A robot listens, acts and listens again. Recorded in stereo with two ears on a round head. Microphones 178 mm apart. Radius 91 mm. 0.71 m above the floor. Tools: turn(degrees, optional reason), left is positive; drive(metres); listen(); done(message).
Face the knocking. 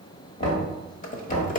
turn(degrees=30, reason="The knocking: about 30° left or 150° left.")
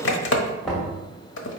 done("Found it: knocking, straight ahead, 2 to 4 m away.")